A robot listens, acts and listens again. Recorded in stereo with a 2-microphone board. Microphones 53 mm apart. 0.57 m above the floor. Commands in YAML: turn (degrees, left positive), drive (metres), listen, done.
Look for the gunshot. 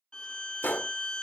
turn: 35
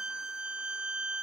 listen: true
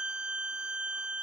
done: "I heard a gunshot, but can't make it out now. It was about straight ahead or 110° left."